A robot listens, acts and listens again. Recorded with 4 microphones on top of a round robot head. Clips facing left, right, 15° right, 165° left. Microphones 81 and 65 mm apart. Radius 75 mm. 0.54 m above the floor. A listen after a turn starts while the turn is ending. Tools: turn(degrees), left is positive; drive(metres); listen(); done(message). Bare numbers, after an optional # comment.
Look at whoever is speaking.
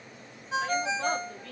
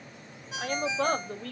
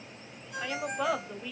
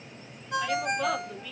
# The woman speaking: 90° right.
turn(-90)
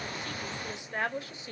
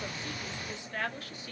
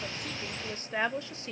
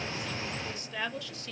# The woman speaking is now 35° left.
turn(35)
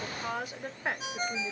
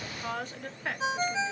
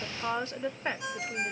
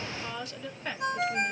# The woman speaking is now 30° left.
turn(30)
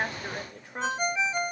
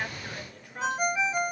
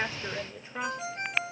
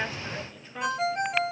# The woman speaking is now 55° left.
turn(55)
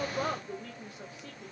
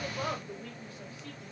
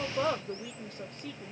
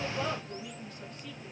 # The woman speaking is now 15° left.
turn(15)
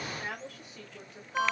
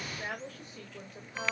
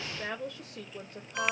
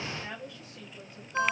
done("Found it: a woman speaking, straight ahead.")